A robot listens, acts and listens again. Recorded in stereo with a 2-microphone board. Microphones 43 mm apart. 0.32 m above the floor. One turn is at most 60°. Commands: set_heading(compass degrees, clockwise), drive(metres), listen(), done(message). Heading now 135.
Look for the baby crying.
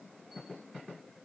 listen()
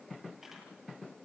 listen()
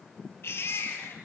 set_heading(75)
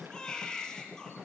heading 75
set_heading(60)
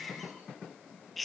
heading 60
done("Facing the baby crying.")